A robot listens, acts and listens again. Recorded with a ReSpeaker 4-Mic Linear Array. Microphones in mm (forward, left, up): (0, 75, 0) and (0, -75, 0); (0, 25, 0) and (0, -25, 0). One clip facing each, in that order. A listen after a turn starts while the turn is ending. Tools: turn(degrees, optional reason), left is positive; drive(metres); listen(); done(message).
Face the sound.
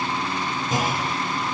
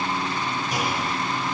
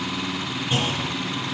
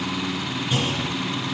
turn(degrees=25, reason="The clunk: about 25° left or 155° left.")
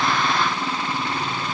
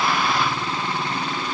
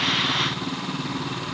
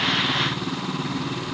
listen()
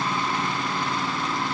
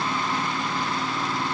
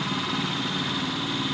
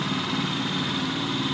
done("I heard a clunk, but can't make it out now. It was about straight ahead or 130° left.")